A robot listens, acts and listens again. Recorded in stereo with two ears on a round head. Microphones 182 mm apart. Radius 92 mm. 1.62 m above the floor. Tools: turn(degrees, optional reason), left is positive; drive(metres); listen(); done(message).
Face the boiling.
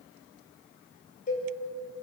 listen()
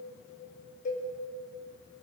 listen()
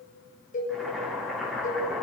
turn(degrees=30)
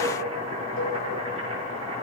turn(degrees=-30, reason="So it is at 30° right.")
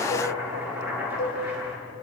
turn(degrees=-10, reason="The boiling is now 10° right.")
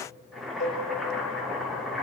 done("Facing the boiling.")